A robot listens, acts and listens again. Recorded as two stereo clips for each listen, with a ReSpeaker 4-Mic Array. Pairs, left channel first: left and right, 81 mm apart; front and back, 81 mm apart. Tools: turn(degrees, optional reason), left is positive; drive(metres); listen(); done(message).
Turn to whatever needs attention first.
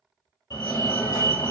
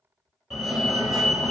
turn(degrees=95, reason="The fire alarm: 95° left.")
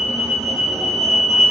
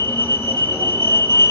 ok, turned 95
done("Found it: a fire alarm, straight ahead, 1 to 2 m away.")